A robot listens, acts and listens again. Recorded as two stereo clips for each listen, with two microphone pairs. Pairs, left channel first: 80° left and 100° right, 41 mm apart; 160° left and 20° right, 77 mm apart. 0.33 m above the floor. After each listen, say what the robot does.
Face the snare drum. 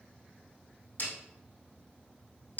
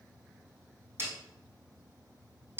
Turn 40° left.
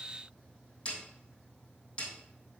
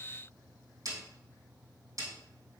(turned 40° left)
Turn 20° left.
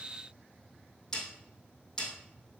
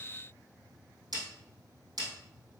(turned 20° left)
Found it: a snare drum, straight ahead, 2 to 4 m away.